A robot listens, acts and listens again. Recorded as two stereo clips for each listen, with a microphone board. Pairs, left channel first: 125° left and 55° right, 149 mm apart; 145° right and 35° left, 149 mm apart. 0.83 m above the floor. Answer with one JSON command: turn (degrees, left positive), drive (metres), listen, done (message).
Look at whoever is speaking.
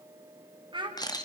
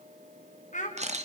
{"turn": -115}
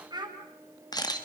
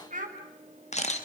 {"done": "Found it: a child speaking, straight ahead."}